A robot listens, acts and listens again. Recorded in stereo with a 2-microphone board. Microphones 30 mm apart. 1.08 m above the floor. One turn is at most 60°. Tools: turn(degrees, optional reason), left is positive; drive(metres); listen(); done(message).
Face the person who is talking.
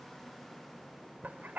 listen()
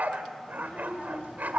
turn(degrees=45, reason="The child speaking: about 45° left or 135° left.")
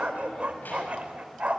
listen()
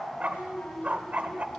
turn(degrees=60, reason="So it is at 90° left.")
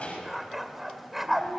turn(degrees=45, reason="The child speaking is now 45° left.")
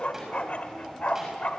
turn(degrees=-15, reason="The child speaking is now 15° right.")
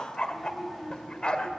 done("Found it: a child speaking, straight ahead.")